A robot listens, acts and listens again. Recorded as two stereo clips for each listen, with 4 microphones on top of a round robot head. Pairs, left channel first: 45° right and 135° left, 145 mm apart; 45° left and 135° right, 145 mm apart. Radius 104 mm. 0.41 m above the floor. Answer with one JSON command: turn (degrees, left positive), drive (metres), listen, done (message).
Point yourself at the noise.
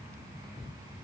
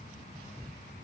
{"listen": true}
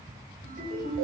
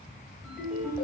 {"turn": 140}
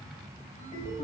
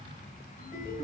{"turn": 10}
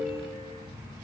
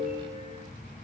{"done": "Facing the ringtone, 1 to 2 m away."}